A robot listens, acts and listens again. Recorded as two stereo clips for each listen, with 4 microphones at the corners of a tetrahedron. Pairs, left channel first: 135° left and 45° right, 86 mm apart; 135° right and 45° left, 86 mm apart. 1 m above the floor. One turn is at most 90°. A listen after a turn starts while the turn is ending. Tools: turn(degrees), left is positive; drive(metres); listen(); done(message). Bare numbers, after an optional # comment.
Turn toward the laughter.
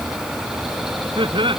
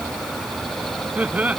# The laughter: 30° right.
turn(-30)
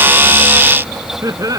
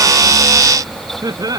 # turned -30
done("Found it: laughter, straight ahead.")